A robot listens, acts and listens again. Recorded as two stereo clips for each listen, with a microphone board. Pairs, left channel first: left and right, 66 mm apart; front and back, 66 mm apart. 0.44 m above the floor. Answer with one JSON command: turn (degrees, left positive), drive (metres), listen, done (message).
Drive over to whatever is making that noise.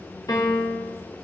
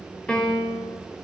{"turn": 75}
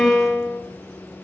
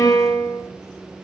{"turn": 10}
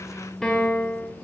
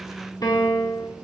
{"drive": 1.0}
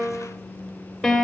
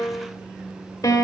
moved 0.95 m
{"drive": 1.0}
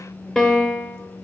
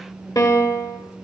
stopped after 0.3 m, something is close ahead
{"done": "I am next to the piano."}